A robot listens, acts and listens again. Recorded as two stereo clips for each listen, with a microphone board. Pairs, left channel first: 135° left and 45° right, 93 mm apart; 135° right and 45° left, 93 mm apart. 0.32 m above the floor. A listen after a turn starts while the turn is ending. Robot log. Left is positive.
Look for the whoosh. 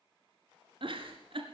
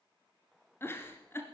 cmd idle
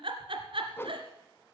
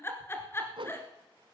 note: The whoosh: 70° left.
cmd yaw +70
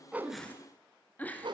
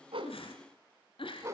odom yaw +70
note: The whoosh is now 10° right.
cmd yaw -10
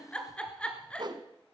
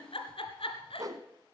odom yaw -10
end: Facing the whoosh.